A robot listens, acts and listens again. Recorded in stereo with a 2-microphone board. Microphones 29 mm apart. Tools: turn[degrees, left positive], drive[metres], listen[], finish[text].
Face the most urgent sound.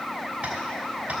Action: listen[]
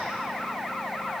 Action: listen[]
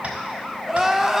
Action: turn[-30]
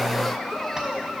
Action: listen[]
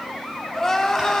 Thought: So it is at 15° left.
Action: turn[15]
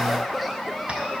Action: finish[Found it: crying, straight ahead.]